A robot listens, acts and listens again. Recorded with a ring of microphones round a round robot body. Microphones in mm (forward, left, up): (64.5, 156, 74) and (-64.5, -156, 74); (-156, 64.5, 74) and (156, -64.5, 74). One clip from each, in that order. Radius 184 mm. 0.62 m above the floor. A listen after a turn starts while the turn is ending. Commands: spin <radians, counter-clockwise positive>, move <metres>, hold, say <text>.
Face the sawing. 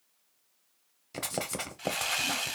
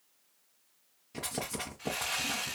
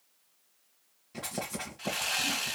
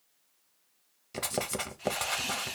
spin 1.48
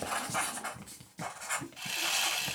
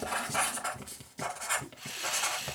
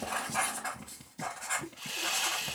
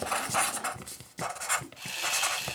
spin 0.70
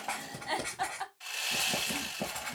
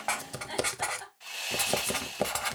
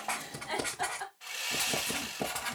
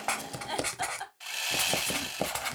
say Found it: sawing, straight ahead, 1 to 2 m away.